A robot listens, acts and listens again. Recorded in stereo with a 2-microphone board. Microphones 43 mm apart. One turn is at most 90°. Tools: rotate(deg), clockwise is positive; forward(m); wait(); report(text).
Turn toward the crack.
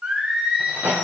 rotate(70)
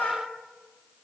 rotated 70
wait()
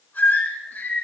report("I heard a crack, but can't make it out now. It was about straight ahead or 40° right.")